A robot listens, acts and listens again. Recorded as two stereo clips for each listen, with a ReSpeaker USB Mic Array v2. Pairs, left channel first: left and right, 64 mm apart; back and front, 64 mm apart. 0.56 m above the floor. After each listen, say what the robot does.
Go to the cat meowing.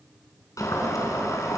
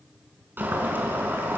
Keep listening.
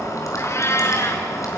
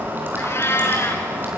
Turn 135° left.
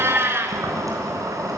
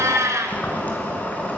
Turn 40° right.
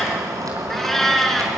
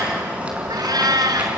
Drive 1.0 m forward.
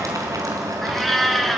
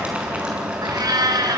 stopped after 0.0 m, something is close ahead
Blocked. The cat meowing is further on, straight ahead.